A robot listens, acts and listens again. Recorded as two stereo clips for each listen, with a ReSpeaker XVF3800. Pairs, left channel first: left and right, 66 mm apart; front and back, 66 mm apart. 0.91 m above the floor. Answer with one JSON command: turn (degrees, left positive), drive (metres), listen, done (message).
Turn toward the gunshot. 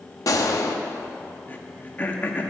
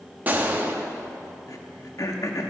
{"turn": 115}
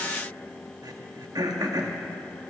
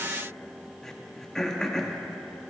{"done": "Facing where the gunshot came from. I can't hear it now."}